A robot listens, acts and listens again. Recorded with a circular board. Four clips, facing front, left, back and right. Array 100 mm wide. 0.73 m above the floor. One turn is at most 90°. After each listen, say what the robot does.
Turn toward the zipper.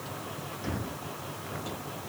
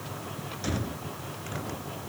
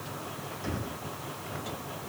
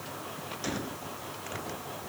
Keep listening.
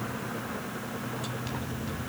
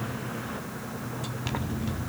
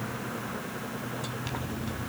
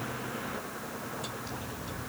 Turn 90° left.
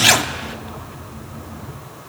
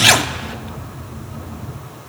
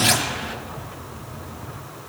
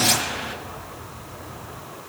Turn 60° left.
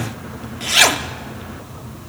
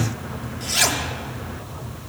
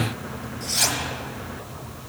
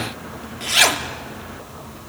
Turn 20° right.
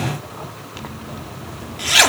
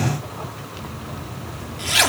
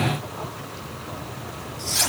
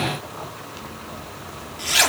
Found it: a zipper, straight ahead, 1 to 2 m away.